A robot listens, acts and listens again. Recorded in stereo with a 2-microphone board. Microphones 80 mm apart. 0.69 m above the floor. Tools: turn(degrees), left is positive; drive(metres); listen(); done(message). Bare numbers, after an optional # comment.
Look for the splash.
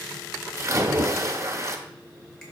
# The splash: about 40° right or 140° right.
turn(-40)
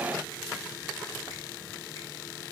listen()
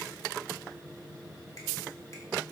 done("I heard a splash, but can't make it out now. It was about straight ahead or 100° right.")